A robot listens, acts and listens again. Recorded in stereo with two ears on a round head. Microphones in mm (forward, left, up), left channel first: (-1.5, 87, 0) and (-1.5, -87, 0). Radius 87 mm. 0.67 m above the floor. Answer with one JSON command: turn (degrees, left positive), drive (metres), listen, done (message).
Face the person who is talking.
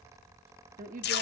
{"turn": -45}
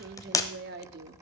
{"turn": -80}
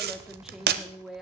{"done": "Facing the woman speaking, 1 to 2 m away."}